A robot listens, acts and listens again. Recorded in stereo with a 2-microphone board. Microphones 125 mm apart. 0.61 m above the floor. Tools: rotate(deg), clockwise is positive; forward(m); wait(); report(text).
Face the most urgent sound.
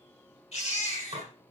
rotate(-50)
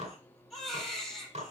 report("Facing the baby crying, over 4 m away.")